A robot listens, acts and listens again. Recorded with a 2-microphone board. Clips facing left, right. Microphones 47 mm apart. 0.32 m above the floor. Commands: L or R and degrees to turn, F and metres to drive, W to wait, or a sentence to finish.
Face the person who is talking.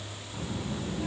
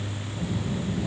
L45
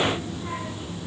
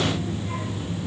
L75
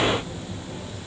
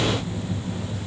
L30
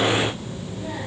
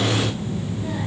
L10
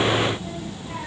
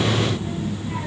Found it: a child speaking, straight ahead, over 4 m away.